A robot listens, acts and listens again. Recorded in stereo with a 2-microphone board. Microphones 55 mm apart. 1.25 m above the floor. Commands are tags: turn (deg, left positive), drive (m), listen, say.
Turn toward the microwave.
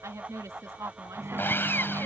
<turn deg="-50"/>
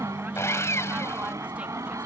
<turn deg="-80"/>
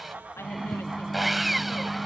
<say>Facing the microwave.</say>